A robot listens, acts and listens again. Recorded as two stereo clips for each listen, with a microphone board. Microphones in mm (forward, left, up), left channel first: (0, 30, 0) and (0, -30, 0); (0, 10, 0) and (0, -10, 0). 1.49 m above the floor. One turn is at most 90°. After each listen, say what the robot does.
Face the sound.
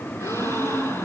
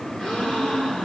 Turn 60° left.
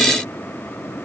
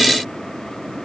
Keep listening.
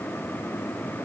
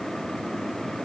I heard a gasp, but can't make it out now. It was about straight ahead or 60° left.